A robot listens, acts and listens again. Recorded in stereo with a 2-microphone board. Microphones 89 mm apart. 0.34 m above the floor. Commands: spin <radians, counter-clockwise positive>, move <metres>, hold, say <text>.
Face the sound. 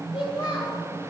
spin 1.57
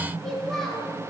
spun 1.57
say Facing the child speaking.